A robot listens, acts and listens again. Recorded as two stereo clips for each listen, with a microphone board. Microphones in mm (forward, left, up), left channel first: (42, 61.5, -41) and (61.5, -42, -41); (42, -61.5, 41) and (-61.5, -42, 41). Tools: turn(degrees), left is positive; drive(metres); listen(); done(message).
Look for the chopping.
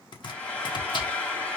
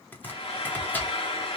turn(degrees=60)
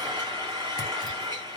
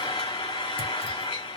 listen()
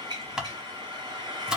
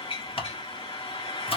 done("Found it: chopping, straight ahead.")